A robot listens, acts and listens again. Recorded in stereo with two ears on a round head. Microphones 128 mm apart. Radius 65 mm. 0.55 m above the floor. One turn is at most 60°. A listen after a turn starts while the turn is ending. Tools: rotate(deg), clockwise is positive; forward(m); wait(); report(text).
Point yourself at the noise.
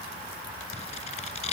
rotate(-50)
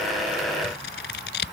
rotate(-60)
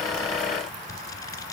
rotate(-25)
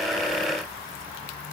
wait()
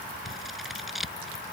report("Facing the scissors.")